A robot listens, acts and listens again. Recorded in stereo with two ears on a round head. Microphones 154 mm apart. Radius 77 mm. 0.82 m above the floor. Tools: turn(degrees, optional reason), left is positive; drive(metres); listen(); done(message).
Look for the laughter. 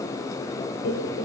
turn(degrees=70, reason="The laughter: about 70° left or 110° left.")
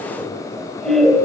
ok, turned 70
done("Facing the laughter, 2 to 4 m away.")